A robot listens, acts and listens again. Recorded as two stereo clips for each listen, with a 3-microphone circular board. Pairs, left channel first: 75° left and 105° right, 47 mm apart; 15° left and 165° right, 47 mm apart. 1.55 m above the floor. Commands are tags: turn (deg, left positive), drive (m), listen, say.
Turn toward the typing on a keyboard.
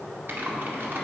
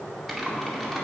<turn deg="-70"/>
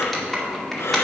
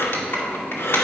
<turn deg="-10"/>
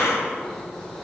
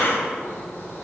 <listen/>
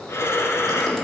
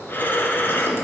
<listen/>
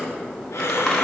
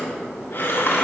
<say>I heard typing on a keyboard from this way, but can't make it out now.</say>